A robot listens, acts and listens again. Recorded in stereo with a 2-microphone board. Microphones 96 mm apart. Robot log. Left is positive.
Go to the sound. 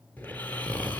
cmd yaw +30
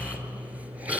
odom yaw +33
note: So it is at 15° right.
cmd yaw -15
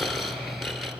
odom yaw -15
cmd fwd 1.0
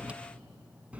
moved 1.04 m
note: The snoring is now 15° right.
cmd yaw -15
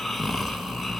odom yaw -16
cmd fwd 1.0
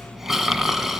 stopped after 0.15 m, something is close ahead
end: Arrived at the snoring, straight ahead.